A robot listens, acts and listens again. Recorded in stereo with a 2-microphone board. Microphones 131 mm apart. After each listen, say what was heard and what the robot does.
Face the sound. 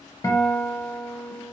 The guitar: about 30° left or 150° left. Turn 30° left.
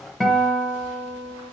Found it: a guitar, straight ahead, under 1 m away.